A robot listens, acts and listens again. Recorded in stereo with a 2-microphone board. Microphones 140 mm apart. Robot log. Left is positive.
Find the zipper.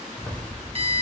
cmd yaw +30
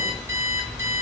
note: So it is at 30° right.
cmd yaw -30
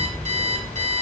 note: The zipper is now 10° left.
cmd yaw +10
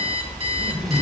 end: Facing the zipper.